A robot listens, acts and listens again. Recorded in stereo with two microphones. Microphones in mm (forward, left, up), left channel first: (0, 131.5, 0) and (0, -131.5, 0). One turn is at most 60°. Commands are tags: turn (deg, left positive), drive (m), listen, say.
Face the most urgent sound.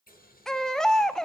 <turn deg="30"/>
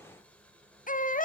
<turn deg="60"/>
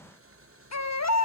<turn deg="60"/>
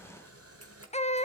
<turn deg="25"/>
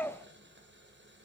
<turn deg="10"/>
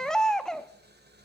<say>Found it: a baby crying, straight ahead.</say>